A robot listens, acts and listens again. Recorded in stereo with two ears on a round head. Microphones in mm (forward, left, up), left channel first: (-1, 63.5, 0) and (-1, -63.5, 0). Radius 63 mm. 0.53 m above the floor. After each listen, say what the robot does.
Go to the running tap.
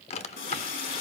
Turn 90° left.
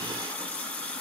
Turn 10° left.
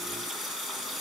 Drive 1.0 m forward.
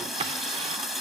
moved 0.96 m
Drive 1.0 m forward.
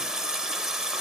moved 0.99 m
Drive 1.0 m forward.
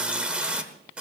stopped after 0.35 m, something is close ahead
Turn 10° right.
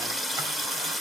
Arrived at the running tap, straight ahead.